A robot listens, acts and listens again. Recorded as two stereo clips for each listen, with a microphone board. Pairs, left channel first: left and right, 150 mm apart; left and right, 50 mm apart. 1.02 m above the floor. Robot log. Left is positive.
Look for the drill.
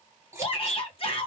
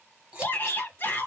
cmd idle
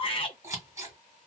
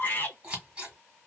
cmd idle
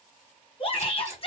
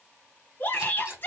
end: I can't make out a drill, only scissors and a shout.